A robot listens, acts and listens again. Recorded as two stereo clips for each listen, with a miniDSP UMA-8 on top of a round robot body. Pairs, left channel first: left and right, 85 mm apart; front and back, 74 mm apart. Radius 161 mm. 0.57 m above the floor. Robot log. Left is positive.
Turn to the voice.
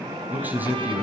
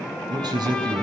note: The man speaking: 160° right.
cmd yaw -160
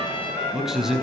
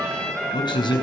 end: Facing the man speaking, over 4 m away.